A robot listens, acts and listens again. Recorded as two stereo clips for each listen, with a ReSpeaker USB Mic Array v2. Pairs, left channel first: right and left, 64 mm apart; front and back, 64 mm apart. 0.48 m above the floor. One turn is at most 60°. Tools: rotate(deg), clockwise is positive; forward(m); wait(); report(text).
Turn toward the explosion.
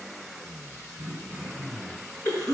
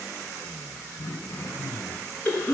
wait()
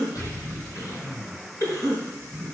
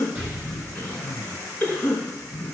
rotate(60)
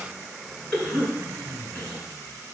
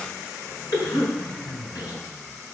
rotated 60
rotate(45)
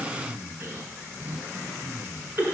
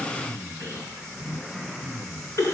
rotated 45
report("I heard an explosion from this way, but can't make it out now.")